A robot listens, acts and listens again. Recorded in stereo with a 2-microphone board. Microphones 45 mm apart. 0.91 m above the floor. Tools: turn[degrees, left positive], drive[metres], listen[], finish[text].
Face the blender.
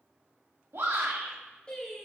Action: listen[]
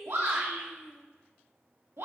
Action: listen[]
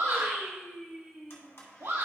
Thought: The blender: about 75° left or 105° left.
Action: turn[75]
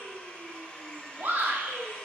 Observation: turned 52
Thought: So it is at 30° left.
Action: turn[30]
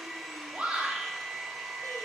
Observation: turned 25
Action: finish[Facing the blender.]